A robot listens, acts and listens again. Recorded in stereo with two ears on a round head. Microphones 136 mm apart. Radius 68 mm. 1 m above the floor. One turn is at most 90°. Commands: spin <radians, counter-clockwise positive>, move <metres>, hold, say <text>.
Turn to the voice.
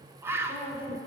spin 0.61
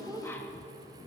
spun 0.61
say Found it: a woman speaking, straight ahead.